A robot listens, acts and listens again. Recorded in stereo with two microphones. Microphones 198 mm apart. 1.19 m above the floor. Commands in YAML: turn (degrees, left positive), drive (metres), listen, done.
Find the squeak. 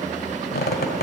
turn: 50
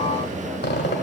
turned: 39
turn: 75
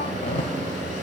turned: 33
turn: 45
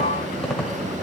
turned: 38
done: "Facing the squeak, 1 to 2 m away."